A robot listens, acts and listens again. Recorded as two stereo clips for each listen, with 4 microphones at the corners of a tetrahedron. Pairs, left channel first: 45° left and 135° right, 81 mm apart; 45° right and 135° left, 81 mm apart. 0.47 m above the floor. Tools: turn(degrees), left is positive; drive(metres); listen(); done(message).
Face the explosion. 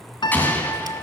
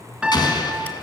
turn(degrees=-20)
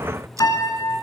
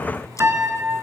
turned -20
done("I heard an explosion from this way, but can't make it out now.")